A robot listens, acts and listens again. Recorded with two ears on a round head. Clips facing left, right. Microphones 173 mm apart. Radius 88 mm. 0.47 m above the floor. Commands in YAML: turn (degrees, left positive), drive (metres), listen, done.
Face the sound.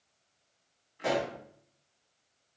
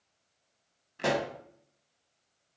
turn: -90
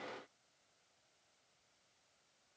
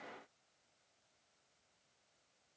done: "I heard a pop from this way, but can't make it out now."